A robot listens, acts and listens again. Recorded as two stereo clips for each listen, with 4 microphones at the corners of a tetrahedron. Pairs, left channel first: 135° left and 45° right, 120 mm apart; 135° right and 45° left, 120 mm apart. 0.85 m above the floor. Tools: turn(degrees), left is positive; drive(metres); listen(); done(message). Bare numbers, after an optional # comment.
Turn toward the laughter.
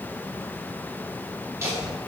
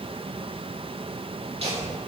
# The laughter: 15° left.
turn(15)
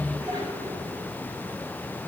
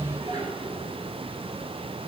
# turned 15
done("Found it: laughter, straight ahead, 2 to 4 m away.")